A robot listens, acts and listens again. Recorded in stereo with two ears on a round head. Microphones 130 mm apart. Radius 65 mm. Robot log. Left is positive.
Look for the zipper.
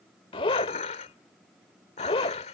note: The zipper: about 40° left or 140° left.
cmd yaw +40
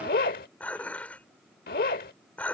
note: So it is at 100° left.
cmd yaw +100
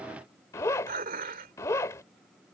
note: The zipper is now 25° left.
cmd yaw +25
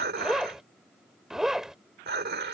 end: Facing the zipper.